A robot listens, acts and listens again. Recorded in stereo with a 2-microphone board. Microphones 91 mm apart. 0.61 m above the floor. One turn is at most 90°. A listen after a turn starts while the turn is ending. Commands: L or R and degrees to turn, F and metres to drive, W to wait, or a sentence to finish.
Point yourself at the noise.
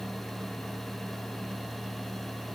W
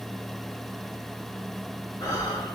L40
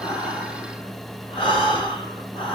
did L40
L90
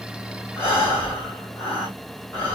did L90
L25
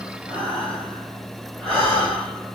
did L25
L10
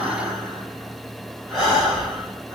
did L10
Facing the breathing, 2 to 4 m away.